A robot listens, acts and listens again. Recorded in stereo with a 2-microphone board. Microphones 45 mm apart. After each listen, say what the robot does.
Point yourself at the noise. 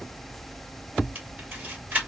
Turn 45° right.
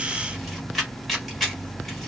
Facing the camera shutter.